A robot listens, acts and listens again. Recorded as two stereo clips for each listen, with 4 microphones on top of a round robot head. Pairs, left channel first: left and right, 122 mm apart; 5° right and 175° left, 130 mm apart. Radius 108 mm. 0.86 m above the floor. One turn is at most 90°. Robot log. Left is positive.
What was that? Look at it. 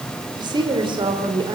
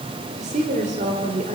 note: The woman speaking: 140° right.
cmd yaw -90
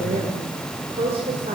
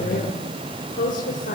note: The woman speaking is now 35° right.
cmd yaw -35
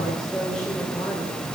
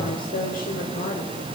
end: Found it: a woman speaking, straight ahead.